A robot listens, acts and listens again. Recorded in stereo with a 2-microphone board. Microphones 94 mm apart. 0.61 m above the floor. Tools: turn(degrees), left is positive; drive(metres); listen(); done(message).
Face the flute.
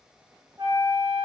turn(degrees=-65)
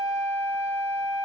done("Facing the flute.")